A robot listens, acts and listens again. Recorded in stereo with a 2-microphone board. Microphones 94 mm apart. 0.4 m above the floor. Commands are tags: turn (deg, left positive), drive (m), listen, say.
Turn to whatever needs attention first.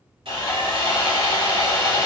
<listen/>
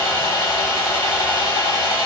<listen/>
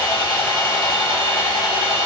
<say>I can't make out anything urgent, only sawing.</say>